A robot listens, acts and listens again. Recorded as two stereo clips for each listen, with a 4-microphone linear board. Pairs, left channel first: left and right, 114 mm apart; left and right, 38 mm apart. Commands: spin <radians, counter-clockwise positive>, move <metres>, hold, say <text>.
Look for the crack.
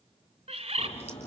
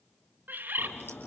spin 1.13
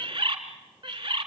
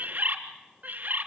hold
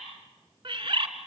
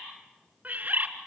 say I heard a crack, but can't make it out now. It was about straight ahead or 50° left.